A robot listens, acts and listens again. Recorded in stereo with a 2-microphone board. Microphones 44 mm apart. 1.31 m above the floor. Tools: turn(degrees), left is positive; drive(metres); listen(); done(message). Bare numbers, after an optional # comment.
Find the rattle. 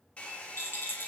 # The rattle: about 60° left or 120° left.
turn(60)
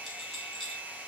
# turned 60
listen()
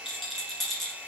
done("Facing the rattle, 1 to 2 m away.")